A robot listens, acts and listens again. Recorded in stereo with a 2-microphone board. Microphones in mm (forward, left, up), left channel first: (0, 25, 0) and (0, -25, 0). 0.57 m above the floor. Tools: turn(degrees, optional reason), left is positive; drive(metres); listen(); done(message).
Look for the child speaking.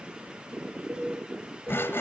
listen()
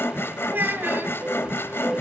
turn(degrees=-45, reason="The child speaking: about 45° right or 135° right.")
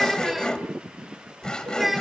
done("Facing the child speaking, 2 to 4 m away.")